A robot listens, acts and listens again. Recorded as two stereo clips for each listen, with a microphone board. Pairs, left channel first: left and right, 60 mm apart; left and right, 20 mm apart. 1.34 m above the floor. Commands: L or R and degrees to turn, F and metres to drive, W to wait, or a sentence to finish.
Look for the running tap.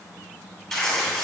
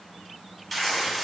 W
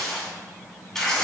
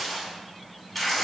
W
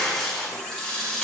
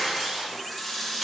L30
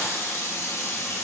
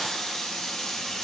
L135
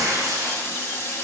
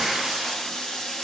L40
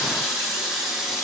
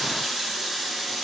Found it: a running tap, straight ahead.